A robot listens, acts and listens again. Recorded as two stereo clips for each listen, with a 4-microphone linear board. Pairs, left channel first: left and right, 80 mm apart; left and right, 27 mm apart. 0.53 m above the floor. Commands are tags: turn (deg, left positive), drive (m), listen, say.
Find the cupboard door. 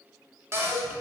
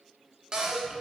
<turn deg="-35"/>
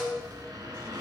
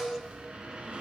<listen/>
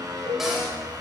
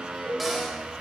<listen/>
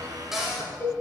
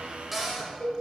<say>Facing the cupboard door, 1 to 2 m away.</say>